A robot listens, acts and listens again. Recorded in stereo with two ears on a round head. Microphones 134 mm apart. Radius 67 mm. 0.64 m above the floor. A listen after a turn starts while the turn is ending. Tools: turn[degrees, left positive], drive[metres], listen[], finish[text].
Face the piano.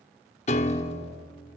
Thought: The piano: about 45° left or 135° left.
Action: turn[45]
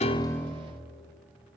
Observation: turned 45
Action: finish[Found it: a piano, straight ahead.]